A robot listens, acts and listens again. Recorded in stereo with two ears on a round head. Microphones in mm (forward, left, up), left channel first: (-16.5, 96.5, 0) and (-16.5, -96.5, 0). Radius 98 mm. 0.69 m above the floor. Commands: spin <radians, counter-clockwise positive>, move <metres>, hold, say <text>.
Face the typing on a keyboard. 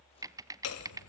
spin -0.26
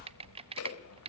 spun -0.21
spin -2.71
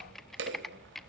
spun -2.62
hold
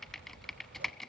say Facing the typing on a keyboard, under 1 m away.